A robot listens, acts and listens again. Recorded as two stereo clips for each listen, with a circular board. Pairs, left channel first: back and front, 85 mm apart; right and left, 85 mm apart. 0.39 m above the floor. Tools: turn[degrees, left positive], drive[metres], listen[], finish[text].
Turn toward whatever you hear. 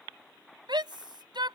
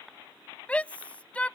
Thought: The shout: 15° right.
Action: turn[-15]
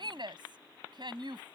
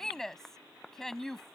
Action: finish[Facing the shout.]